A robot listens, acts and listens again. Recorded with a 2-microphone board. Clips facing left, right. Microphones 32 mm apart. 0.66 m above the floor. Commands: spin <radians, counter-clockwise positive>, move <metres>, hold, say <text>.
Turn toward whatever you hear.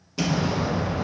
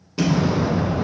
spin -0.52
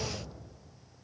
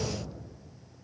hold
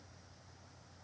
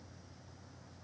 say I heard an explosion, but can't make it out now. It was about 20° left or 140° right.